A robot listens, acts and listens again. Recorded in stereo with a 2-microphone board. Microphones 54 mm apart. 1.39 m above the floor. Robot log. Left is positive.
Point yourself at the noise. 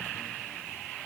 cmd idle
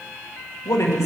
cmd yaw +90
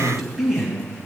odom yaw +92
end: Facing the man speaking, 2 to 4 m away.